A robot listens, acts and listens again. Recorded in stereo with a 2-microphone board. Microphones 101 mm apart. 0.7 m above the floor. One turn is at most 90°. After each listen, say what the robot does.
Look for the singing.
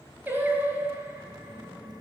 Turn 15° right.
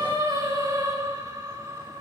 Turn 30° right.
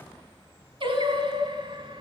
Turn 90° right.
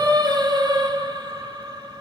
Turn 45° right.
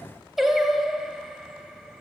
Facing the singing.